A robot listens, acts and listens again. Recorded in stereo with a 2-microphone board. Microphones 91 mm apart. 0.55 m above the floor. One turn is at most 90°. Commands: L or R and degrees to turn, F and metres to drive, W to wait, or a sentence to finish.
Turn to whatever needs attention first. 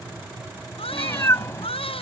L90
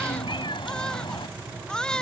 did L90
L10
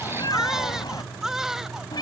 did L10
Found it: a baby crying, straight ahead.